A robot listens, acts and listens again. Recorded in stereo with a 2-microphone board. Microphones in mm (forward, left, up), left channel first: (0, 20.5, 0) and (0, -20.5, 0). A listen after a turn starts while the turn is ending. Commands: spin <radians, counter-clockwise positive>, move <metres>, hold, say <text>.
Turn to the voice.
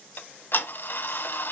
hold
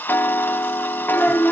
spin 0.52
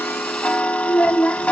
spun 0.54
spin 2.71
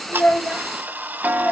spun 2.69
hold
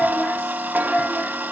spin 0.17
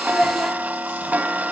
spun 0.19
say Facing the child speaking.